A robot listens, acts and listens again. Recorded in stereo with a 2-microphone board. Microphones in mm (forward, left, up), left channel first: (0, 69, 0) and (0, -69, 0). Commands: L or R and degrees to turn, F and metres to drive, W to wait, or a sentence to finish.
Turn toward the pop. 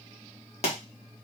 L55
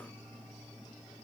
W
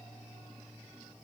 I heard a pop, but can't make it out now. It was about straight ahead or 70° left.